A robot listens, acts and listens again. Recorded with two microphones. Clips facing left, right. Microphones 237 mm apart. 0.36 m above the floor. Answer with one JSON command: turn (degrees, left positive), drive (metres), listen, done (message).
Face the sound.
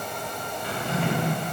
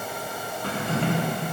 {"turn": -65}
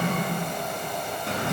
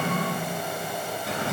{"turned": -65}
{"done": "Found it: a drawer, straight ahead, 1 to 2 m away."}